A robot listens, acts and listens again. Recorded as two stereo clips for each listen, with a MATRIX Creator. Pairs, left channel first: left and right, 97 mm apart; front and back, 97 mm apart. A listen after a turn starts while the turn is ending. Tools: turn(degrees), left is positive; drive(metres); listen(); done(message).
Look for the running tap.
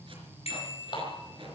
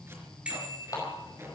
turn(degrees=55)
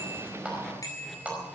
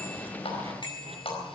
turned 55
turn(degrees=-15)
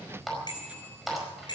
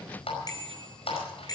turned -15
done("Found it: a running tap, straight ahead, over 4 m away.")